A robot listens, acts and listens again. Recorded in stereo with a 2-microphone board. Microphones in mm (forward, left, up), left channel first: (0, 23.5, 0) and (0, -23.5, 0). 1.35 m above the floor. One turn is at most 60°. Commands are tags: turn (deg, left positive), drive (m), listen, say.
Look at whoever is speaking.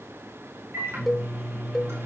<listen/>
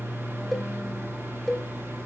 <listen/>
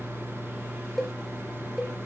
<say>I can't make out anyone speaking to turn to.</say>